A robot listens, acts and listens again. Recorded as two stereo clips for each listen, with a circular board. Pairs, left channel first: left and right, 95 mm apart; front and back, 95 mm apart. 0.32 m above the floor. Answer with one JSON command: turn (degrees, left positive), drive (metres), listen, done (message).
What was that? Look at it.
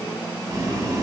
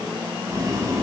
{"turn": -135}
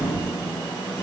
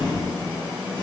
{"turn": 30}
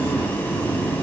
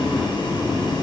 {"turn": 20}
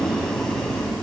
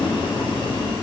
{"done": "Found it: boiling, straight ahead."}